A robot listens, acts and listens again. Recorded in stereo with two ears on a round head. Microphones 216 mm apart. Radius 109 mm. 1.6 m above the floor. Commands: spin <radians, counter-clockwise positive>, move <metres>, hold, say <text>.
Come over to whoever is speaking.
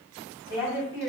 spin -0.26
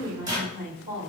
spin -2.62
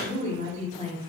spin -0.44
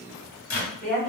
move 1.0
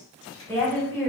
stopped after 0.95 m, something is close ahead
spin 0.17
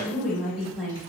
say I am next to the woman speaking.